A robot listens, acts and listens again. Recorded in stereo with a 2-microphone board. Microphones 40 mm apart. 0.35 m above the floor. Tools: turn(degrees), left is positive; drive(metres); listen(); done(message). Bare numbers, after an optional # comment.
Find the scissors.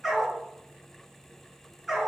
listen()
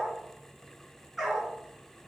listen()
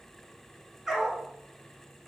done("I can't make out scissors, only a dog barking.")